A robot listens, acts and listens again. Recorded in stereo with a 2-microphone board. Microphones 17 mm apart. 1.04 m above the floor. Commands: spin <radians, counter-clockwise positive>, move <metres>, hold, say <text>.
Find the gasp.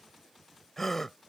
spin 0.35
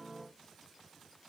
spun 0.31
hold
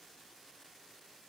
say I heard a gasp, but can't make it out now. It was about straight ahead or 145° left.